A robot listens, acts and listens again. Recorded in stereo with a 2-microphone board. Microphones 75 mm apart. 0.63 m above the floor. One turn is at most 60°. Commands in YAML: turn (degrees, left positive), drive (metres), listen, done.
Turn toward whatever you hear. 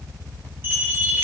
turn: -25
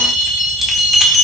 done: "Facing the bell, 1 to 2 m away."